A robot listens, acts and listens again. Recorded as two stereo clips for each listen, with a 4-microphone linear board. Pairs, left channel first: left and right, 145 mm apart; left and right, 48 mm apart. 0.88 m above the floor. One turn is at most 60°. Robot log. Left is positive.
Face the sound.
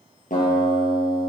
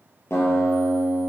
note: The guitar: about 65° left or 115° left.
cmd yaw +60
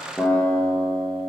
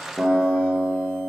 note: So it is at 10° left.
cmd yaw +10
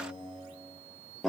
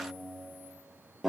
end: Facing the guitar, over 4 m away.